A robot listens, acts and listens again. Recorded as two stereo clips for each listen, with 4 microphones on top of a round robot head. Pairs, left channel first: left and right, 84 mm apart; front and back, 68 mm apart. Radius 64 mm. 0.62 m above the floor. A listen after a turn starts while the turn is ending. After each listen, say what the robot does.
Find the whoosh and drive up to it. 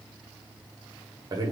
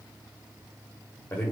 Keep listening.
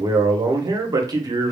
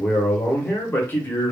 Keep listening.
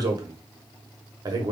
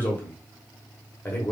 I can't make out a whoosh, only a man speaking.